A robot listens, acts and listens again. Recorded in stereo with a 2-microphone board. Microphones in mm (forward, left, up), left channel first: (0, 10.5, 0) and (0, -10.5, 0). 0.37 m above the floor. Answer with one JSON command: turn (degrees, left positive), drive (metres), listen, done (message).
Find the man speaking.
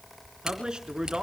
{"turn": -45}
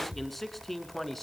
{"done": "Facing the man speaking."}